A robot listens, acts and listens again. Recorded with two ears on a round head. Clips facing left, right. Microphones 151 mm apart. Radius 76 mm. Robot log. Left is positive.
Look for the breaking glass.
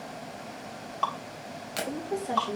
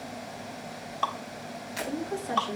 note: The breaking glass: about 65° left or 115° left.
cmd yaw +65
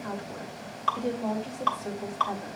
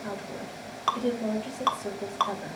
cmd idle
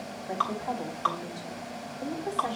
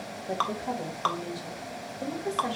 end: I heard breaking glass, but can't make it out now. It was about straight ahead or 50° left.